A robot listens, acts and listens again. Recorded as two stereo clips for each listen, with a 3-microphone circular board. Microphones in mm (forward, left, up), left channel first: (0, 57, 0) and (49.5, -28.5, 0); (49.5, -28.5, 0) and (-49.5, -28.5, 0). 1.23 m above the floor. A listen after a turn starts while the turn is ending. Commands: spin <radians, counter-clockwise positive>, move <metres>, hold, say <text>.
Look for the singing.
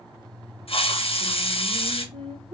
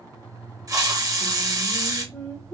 spin -1.57
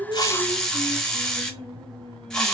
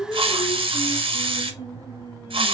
spin -0.87
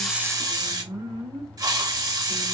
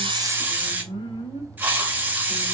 spin -0.44
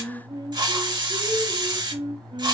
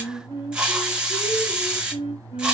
spin -0.35
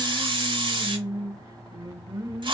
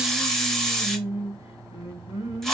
spin -0.17
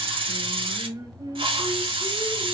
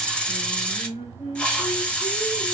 say Facing the singing, 1 to 2 m away.